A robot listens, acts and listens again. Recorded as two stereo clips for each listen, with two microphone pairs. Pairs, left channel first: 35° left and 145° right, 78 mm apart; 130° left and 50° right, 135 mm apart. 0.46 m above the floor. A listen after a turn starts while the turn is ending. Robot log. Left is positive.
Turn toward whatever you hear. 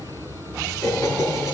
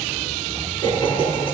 note: The laughter: 80° left.
cmd yaw +80
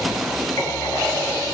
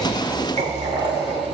note: The laughter is now 15° right.
cmd yaw -15
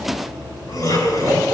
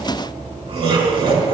end: Facing the laughter.